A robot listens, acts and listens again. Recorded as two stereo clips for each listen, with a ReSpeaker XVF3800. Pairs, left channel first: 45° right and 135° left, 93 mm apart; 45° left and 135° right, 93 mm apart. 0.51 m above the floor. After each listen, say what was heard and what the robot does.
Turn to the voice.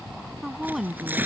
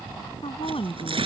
The woman speaking: 45° left. Turn 45° left.
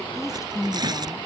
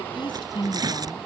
The woman speaking is now 10° left. Turn 10° left.
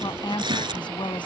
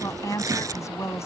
The woman speaking is now 15° right. Turn 15° right.
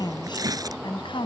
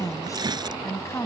The woman speaking is now 15° right. Turn 15° right.
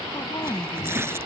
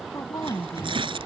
The woman speaking is now 10° right. Turn 10° right.
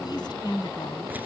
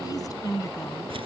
Facing the woman speaking.